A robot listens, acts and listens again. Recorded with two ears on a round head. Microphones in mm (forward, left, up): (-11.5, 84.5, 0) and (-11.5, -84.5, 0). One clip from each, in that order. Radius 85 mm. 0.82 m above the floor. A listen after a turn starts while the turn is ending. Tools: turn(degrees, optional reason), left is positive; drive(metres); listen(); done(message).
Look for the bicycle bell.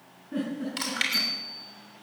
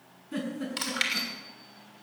turn(degrees=65, reason="The bicycle bell: about 65° left or 115° left.")
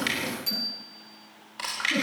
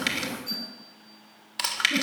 turn(degrees=55, reason="So it is at 55° left.")
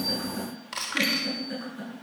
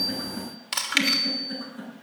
turn(degrees=25, reason="The bicycle bell is now 25° left.")
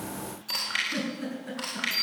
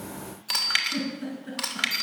done("Found it: a bicycle bell, straight ahead, over 4 m away.")